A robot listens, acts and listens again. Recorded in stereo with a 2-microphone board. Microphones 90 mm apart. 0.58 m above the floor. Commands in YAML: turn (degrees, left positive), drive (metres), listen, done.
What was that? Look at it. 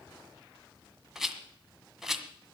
turn: -30
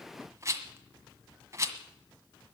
turn: -145
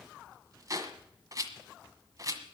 turn: -40
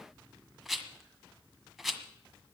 done: "Found it: a rattle, straight ahead."